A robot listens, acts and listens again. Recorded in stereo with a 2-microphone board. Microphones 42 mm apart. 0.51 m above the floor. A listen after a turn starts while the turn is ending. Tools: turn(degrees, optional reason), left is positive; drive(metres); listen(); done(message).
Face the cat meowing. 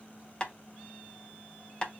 listen()
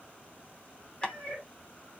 turn(degrees=25, reason="The cat meowing: about 25° left or 155° left.")
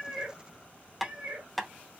turn(degrees=-30, reason="So it is at 30° right.")
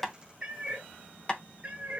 turn(degrees=-25, reason="The cat meowing is now 25° right.")
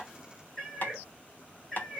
done("Found it: a cat meowing, straight ahead, 1 to 2 m away.")